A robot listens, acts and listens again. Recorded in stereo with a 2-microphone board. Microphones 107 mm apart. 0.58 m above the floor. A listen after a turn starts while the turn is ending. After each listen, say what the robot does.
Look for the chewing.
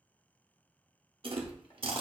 Turn 55° right.
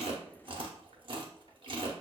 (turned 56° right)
Turn 60° right.
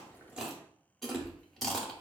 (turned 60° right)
Found it: chewing, straight ahead.